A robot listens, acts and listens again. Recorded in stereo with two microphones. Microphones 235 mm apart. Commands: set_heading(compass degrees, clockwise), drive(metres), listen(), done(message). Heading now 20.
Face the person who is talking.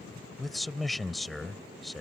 set_heading(350)
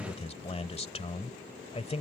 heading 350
set_heading(200)
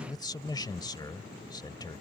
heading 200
set_heading(180)
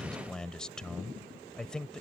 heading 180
done("Found it: a man speaking, straight ahead.")